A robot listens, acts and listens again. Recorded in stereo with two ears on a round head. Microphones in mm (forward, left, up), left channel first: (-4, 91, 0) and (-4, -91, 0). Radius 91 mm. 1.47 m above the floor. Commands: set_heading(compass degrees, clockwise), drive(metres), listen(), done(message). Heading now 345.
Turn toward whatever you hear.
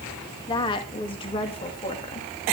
set_heading(315)
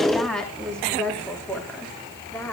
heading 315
set_heading(305)
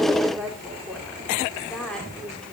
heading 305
done("Found it: a woman speaking, straight ahead, over 4 m away.")